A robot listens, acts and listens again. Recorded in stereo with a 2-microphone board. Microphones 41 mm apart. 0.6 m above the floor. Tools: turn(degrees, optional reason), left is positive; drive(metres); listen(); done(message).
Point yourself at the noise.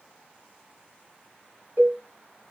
turn(degrees=-90)
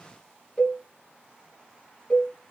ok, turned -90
turn(degrees=15, reason="So it is at 15° left.")
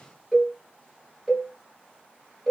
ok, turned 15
done("Found it: a cowbell, straight ahead.")